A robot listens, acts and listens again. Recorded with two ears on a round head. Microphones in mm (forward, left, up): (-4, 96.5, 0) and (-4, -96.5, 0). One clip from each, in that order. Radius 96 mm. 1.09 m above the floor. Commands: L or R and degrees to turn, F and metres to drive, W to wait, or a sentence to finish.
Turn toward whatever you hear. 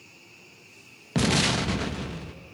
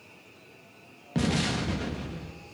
L35
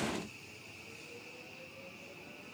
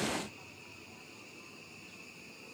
W
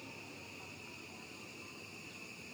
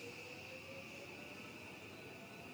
I heard an explosion, but can't make it out now. It was about straight ahead or 110° left.